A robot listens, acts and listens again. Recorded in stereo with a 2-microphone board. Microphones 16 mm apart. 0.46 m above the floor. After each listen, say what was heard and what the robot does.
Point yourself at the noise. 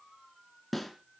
Turn 30° left.
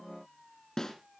So it is at 135° left. Turn 135° left.
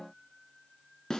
The snare drum is now 40° left. Turn 40° left.
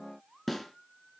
The snare drum is now 10° left. Turn 10° left.
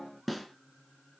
Facing the snare drum, 2 to 4 m away.